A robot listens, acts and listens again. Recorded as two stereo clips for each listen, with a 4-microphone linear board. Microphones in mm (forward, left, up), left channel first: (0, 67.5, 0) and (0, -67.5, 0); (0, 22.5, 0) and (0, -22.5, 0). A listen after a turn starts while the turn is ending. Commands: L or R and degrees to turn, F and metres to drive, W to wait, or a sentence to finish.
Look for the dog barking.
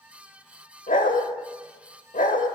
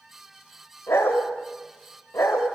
L90
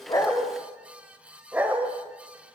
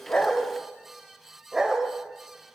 R15
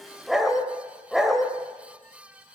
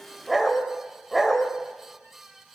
Facing the dog barking, 1 to 2 m away.